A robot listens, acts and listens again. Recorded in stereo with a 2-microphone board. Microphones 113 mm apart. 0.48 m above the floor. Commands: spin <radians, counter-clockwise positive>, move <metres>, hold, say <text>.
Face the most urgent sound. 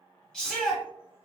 spin 0.52
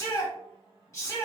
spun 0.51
spin 2.44
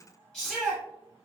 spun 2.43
say Facing the shout.